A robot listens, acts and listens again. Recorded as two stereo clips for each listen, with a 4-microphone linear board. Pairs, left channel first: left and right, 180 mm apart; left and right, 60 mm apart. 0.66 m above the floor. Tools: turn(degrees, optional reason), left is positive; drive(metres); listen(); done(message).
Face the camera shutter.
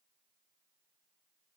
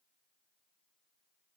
listen()
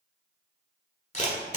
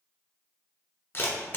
turn(degrees=40, reason="The camera shutter: about 40° left or 140° left.")
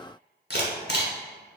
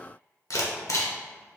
turn(degrees=100, reason="So it is at 100° left.")
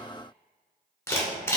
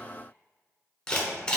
turn(degrees=15, reason="The camera shutter is now 15° left.")
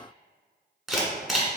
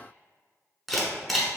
done("Facing the camera shutter.")